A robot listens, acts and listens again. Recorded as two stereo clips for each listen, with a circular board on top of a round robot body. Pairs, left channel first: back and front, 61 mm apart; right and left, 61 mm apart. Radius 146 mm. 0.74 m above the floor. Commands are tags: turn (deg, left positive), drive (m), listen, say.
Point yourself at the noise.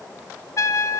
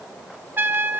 <turn deg="145"/>
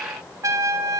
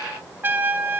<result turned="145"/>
<turn deg="35"/>
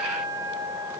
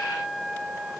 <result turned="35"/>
<turn deg="10"/>
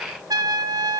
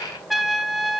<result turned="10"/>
<say>Found it: a trumpet, straight ahead.</say>